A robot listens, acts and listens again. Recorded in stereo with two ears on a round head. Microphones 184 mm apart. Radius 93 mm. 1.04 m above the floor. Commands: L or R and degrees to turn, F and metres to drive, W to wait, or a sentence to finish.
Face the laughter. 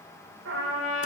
W
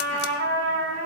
W
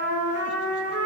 I can't make out laughter, only a trumpet.